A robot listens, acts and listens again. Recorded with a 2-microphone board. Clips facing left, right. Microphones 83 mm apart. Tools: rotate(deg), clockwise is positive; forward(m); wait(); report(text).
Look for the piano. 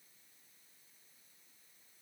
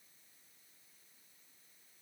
wait()
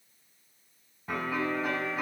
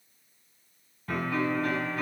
rotate(-20)
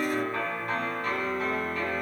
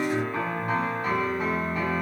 report("Facing the piano, over 4 m away.")